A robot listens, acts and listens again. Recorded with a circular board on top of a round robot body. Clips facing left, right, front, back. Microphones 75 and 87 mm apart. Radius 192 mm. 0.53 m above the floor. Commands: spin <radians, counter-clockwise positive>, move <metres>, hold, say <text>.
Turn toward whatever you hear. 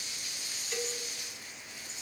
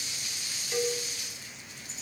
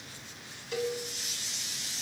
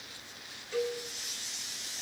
spin -0.26
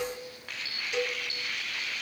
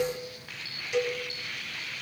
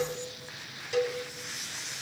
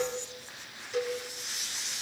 say Facing the cowbell, over 4 m away.